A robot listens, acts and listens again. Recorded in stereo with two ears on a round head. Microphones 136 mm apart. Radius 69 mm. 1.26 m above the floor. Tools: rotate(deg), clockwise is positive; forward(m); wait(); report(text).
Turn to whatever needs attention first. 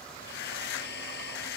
wait()
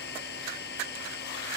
wait()
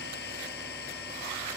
report("I can't make out anything urgent to turn to.")